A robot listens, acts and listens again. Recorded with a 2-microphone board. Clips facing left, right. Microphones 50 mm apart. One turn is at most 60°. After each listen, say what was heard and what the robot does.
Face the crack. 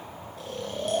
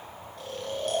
Keep listening.
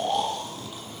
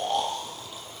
Keep listening.
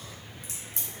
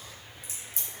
The crack: about 65° left or 115° left. Turn 60° left.
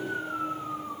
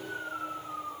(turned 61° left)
Keep listening.
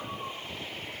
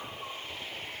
I heard a crack, but can't make it out now. It was about 5° left or 55° left.